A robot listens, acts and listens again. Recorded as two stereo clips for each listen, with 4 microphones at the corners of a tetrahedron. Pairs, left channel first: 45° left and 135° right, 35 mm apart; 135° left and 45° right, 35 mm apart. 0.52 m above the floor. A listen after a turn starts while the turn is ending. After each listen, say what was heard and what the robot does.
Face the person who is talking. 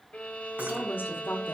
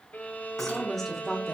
The woman speaking: 50° left. Turn 50° left.
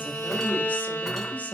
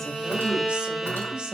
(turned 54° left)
Keep listening.
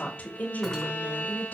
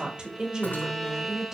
The woman speaking is now 25° left. Turn 25° left.
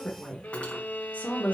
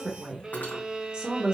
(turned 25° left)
The woman speaking is now 20° left. Turn 20° left.
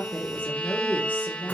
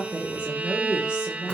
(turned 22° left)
The woman speaking is now 20° left. Turn 20° left.
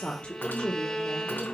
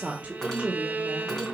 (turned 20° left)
Facing the woman speaking.